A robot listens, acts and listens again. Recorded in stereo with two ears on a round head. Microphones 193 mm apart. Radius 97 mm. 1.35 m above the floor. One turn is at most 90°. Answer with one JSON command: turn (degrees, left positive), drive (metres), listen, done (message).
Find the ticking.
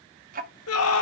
{"turn": -40}
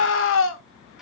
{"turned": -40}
{"done": "Facing the ticking."}